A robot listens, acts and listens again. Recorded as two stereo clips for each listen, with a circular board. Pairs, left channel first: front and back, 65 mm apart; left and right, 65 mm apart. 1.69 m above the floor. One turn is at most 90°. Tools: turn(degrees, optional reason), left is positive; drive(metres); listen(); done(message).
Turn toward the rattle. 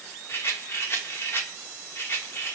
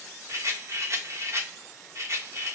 turn(degrees=-50, reason="The rattle: 50° right.")
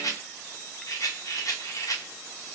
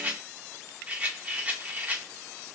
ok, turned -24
turn(degrees=-25, reason="The rattle is now 25° right.")
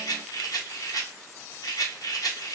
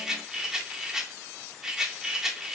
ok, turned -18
turn(degrees=-10, reason="The rattle is now 10° right.")
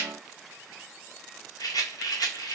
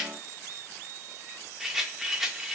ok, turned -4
done("Facing the rattle.")